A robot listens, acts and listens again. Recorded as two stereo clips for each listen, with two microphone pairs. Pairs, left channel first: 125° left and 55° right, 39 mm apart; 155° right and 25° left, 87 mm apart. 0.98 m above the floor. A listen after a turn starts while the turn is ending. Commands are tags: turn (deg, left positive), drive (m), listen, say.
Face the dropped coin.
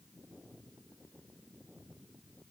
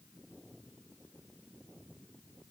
<listen/>
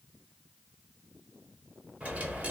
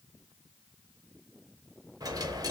<turn deg="-10"/>
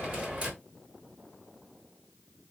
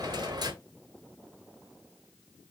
<say>Found it: a dropped coin, straight ahead, 1 to 2 m away.</say>